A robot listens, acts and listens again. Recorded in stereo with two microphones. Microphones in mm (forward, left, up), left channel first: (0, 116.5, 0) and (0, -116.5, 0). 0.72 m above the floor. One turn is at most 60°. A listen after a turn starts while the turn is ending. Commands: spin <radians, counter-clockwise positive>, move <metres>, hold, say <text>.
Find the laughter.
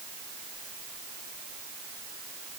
hold
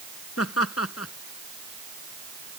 spin 1.05
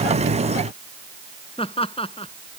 spin 0.44
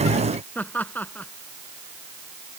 say Facing the laughter.